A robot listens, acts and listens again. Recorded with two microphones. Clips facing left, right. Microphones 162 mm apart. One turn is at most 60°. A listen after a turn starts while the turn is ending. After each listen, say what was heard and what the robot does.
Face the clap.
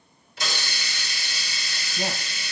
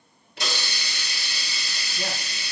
Keep listening.
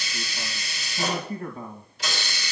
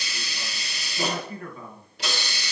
Keep listening.
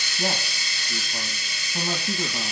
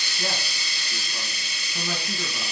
I can't make out a clap to turn to.